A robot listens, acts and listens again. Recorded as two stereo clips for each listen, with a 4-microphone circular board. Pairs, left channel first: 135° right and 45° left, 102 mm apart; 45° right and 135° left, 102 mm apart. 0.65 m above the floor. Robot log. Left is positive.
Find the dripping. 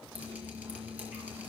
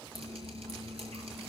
note: The dripping: 120° left.
cmd yaw +120
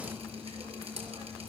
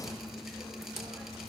note: The dripping is now 45° left.
cmd yaw +45
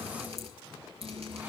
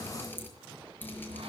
note: The dripping is now 25° left.
cmd yaw +25
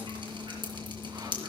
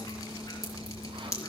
note: The dripping is now 10° left.
cmd yaw +10
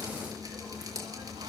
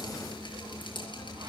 end: Facing the dripping.